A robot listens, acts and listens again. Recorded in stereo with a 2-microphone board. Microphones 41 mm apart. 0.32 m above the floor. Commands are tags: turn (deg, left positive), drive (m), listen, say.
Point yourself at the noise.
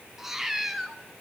<turn deg="-30"/>
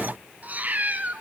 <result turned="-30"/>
<turn deg="-145"/>
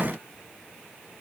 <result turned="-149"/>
<listen/>
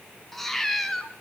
<say>Found it: a cat meowing, straight ahead.</say>